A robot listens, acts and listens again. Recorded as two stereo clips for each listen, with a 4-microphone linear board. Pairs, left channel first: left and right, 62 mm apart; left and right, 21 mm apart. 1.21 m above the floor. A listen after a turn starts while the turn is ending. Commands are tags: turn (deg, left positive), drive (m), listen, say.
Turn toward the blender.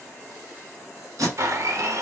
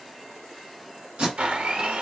<turn deg="-50"/>
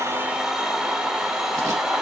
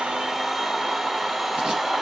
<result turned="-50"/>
<turn deg="-15"/>
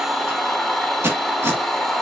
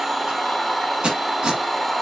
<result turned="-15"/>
<say>Facing the blender, under 1 m away.</say>